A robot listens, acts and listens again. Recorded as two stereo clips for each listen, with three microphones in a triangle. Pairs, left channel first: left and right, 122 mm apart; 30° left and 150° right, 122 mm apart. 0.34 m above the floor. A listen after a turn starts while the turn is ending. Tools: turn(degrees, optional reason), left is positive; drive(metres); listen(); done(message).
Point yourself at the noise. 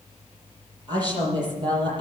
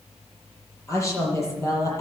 turn(degrees=-35, reason="The woman speaking: 35° right.")
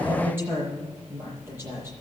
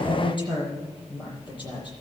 turn(degrees=-20, reason="The woman speaking is now 20° right.")
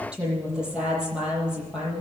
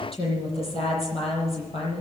done("Found it: a woman speaking, straight ahead, over 4 m away.")